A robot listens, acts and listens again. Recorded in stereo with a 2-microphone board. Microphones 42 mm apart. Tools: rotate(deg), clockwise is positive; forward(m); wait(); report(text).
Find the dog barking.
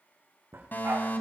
rotate(90)
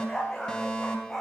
report("Found it: a dog barking, straight ahead, over 4 m away.")